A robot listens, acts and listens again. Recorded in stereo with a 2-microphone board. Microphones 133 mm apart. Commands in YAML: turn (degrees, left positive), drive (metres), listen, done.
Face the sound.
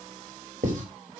turn: -65
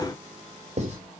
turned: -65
turn: -50
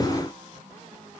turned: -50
listen: true
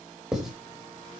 done: "Found it: writing, straight ahead, over 4 m away."